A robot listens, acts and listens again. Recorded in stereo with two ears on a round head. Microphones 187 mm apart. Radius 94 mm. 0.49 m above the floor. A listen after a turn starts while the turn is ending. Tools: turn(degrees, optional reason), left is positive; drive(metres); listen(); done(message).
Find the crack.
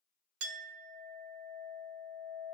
listen()
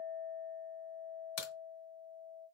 turn(degrees=90)
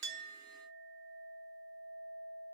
done("I heard a crack from this way, but can't make it out now.")